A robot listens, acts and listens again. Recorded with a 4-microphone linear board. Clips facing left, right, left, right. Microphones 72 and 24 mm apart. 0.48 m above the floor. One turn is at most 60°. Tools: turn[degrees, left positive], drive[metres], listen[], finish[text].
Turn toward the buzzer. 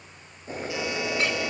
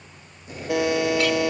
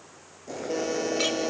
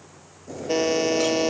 Thought: The buzzer: about 65° right or 115° right.
Action: turn[-60]
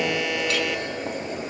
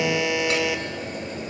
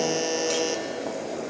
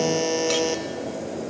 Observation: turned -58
Action: finish[Facing the buzzer, 1 to 2 m away.]